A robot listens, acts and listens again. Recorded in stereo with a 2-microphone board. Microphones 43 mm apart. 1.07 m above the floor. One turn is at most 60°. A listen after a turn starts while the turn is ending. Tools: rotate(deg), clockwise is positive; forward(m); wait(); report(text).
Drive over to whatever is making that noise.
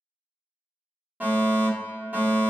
rotate(40)
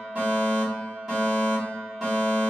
rotate(10)
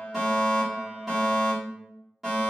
forward(1.0)
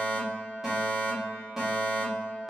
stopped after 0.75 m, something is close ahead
rotate(10)
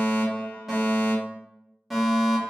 report("Arrived at the fire alarm, straight ahead.")